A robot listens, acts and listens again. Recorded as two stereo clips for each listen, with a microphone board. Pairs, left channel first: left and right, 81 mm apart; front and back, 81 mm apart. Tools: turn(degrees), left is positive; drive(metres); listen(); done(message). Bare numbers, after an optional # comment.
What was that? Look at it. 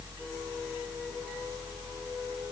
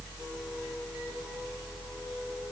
listen()
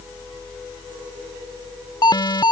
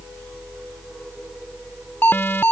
# The alarm: 65° left.
turn(65)
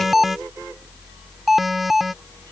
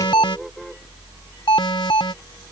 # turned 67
done("Found it: an alarm, straight ahead.")